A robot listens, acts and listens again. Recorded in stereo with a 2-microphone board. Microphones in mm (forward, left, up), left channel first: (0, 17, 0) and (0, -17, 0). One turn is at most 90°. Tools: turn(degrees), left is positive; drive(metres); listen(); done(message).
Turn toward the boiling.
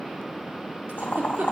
turn(degrees=65)
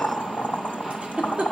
turn(degrees=50)
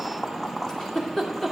done("Facing the boiling, 1 to 2 m away.")